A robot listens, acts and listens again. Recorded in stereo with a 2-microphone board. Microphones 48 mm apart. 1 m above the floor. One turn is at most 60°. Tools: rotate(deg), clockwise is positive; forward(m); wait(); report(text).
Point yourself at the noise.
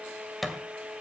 rotate(-30)
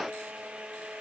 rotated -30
wait()
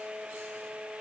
report("I heard a thud, but can't make it out now. It was about 30° right or 150° left.")